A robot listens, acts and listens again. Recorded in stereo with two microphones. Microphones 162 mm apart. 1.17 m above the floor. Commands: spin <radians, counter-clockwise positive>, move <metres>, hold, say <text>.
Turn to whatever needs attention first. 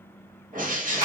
hold
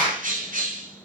hold
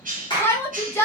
spin 0.52
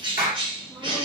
hold
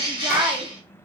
hold
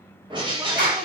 say I heard a shout, but can't make it out now. It was about 15° right or 135° left.